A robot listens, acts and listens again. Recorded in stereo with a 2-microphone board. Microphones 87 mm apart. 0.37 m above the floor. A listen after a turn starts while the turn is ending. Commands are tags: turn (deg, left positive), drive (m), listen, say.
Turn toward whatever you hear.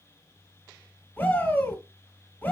<turn deg="15"/>
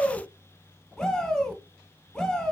<say>Facing the shout, 1 to 2 m away.</say>